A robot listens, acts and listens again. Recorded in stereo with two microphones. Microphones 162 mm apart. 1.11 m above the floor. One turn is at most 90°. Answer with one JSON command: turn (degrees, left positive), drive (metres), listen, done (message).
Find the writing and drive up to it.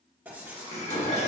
{"turn": -30}
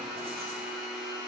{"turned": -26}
{"listen": true}
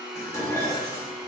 {"listen": true}
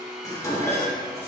{"done": "I heard writing, but can't make it out now. It was about 15° left or 140° right. I did not reach it."}